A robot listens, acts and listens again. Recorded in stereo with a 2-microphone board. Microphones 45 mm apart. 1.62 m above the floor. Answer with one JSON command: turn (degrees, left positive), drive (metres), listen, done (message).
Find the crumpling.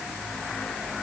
{"listen": true}
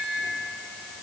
{"listen": true}
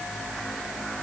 {"done": "I can't make out crumpling."}